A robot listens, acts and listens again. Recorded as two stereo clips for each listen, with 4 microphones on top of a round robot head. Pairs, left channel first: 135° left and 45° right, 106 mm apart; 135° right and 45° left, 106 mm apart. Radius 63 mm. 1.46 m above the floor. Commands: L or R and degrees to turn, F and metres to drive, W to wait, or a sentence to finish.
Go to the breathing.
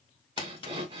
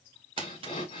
R90
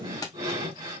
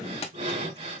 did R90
L15
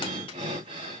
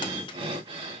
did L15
F1.0
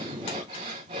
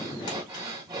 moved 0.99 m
F1.0
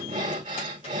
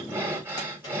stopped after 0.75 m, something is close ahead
R20
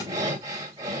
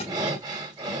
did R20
I am next to the breathing.